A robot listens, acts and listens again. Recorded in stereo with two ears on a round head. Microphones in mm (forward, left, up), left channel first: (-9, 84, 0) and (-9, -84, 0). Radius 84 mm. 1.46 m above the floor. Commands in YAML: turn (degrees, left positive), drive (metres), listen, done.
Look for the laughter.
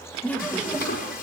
turn: 30
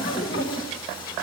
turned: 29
turn: 130
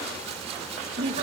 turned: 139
turn: -25
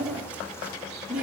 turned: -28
done: "Found it: laughter, straight ahead, 2 to 4 m away."